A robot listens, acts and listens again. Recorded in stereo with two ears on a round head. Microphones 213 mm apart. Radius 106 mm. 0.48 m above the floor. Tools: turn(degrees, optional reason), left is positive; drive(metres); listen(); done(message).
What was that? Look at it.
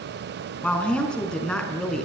turn(degrees=30)
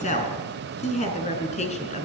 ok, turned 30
turn(degrees=150, reason="So it is at 150° left.")
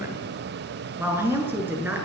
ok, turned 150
turn(degrees=-10, reason="The woman speaking is now 10° right.")
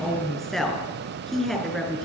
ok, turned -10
done("Found it: a woman speaking, straight ahead.")